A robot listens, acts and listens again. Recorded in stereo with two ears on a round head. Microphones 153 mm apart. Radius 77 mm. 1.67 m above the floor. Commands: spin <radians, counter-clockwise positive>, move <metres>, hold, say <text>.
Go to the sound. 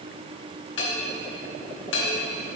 spin 1.57
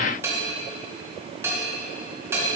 spin -0.26
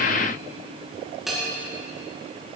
move 1.0
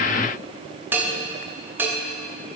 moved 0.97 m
spin -0.17
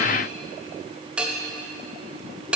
move 1.0
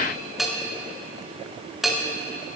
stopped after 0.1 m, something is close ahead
say I am next to the bell.